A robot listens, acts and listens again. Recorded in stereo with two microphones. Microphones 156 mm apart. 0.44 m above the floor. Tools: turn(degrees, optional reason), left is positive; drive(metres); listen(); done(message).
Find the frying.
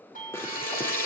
turn(degrees=15, reason="The frying: about 15° left or 165° left.")
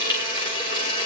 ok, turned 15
turn(degrees=150, reason="So it is at 150° left.")
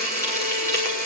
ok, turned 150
turn(degrees=20, reason="The frying is now 20° left.")
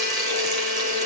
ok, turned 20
done("Found it: frying, straight ahead.")